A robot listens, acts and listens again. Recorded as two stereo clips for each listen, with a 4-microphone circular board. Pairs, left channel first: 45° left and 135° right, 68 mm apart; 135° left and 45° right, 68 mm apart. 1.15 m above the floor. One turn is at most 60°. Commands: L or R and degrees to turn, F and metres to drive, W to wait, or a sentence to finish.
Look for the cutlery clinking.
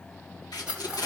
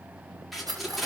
R60
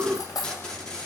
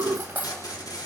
L20
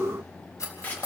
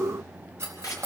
Found it: cutlery clinking, straight ahead.